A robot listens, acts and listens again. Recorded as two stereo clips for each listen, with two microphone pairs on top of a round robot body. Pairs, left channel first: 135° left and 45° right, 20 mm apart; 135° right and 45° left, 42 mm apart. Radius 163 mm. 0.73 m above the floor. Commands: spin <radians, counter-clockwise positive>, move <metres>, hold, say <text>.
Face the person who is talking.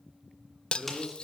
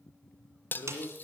spin -2.18
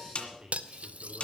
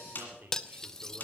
say Found it: a man speaking, straight ahead, 2 to 4 m away.